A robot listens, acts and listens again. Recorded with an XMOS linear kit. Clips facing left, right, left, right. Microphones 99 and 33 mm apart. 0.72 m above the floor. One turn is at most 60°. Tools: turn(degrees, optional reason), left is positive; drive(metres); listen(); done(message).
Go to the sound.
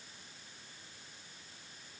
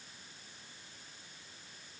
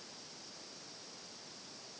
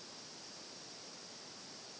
listen()
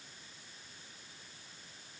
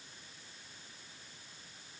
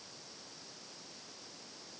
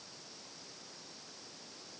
listen()
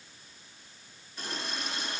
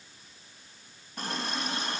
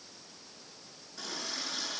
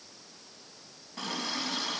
turn(degrees=-55, reason="The running tap: about 55° right or 125° right.")
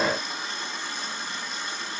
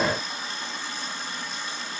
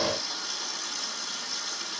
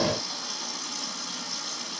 drive(metres=1.0)
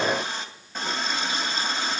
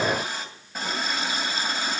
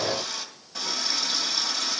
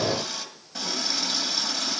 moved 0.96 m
drive(metres=1.0)
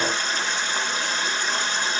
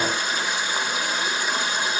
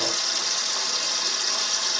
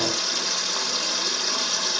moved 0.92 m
turn(degrees=-10, reason="The running tap is now 10° right.")
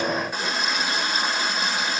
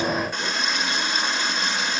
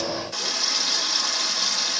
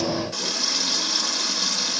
drive(metres=1.0)
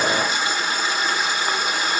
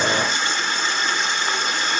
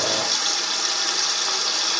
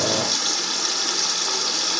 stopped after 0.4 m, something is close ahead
done("Arrived at the running tap, straight ahead.")